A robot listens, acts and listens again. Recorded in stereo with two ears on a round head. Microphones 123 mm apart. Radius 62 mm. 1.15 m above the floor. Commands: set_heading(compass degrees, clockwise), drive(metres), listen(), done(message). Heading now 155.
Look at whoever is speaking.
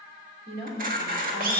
set_heading(245)
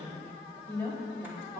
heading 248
set_heading(233)
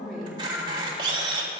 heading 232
done("Found it: a woman speaking, straight ahead.")